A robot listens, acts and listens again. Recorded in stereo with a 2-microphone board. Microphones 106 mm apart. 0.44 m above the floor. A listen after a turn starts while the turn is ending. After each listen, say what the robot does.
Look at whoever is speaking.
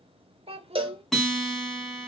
Turn 65° right.
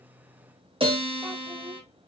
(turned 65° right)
Keep listening.
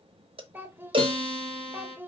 Turn 20° right.
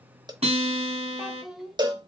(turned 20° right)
Facing the child speaking, under 1 m away.